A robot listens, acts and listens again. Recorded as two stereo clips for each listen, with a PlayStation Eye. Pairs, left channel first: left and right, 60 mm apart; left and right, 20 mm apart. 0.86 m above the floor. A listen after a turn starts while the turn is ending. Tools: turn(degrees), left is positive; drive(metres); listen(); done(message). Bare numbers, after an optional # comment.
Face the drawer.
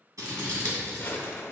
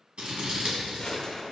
# The drawer: about 40° left or 140° left.
turn(40)
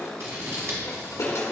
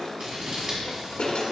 # So it is at 100° left.
turn(100)
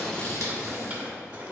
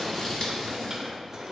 # The drawer is now 25° right.
turn(-25)
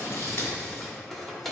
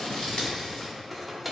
done("Facing the drawer.")